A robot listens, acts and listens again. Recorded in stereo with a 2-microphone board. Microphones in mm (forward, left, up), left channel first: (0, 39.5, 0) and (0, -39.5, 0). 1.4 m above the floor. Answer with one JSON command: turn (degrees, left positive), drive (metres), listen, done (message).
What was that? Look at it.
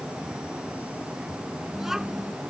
{"turn": -30}
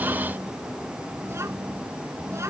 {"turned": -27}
{"turn": -145}
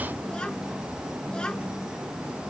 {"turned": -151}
{"turn": 10}
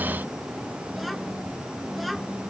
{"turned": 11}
{"done": "Found it: a child speaking, straight ahead."}